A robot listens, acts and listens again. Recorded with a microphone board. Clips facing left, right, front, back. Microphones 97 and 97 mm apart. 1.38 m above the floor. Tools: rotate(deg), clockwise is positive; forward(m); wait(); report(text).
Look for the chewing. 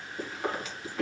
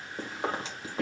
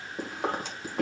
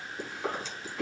rotate(30)
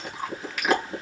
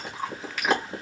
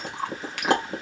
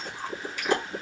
report("Facing the chewing.")